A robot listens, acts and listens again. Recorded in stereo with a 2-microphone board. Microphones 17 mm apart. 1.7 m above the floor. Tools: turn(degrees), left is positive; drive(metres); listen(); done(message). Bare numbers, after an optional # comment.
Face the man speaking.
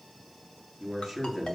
turn(30)
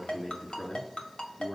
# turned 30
# So it is at 140° left.
turn(140)
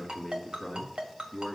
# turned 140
# The man speaking is now 15° right.
turn(-15)
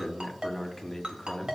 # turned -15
# The man speaking is now 10° left.
turn(10)
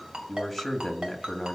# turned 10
done("Found it: a man speaking, straight ahead.")